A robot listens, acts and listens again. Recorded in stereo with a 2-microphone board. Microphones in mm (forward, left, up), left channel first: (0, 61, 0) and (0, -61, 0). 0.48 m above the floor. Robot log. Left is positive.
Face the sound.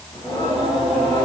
note: The singing: about 40° left or 140° left.
cmd yaw +40
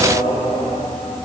note: So it is at 110° left.
cmd yaw +110
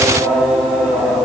end: Facing the singing.